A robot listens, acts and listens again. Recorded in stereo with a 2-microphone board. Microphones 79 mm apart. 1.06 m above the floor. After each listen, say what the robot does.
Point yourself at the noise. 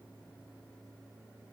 Keep listening.
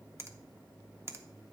Turn 35° right.
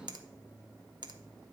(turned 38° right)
Turn 105° right.
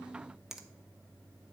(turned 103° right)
Facing the finger snap.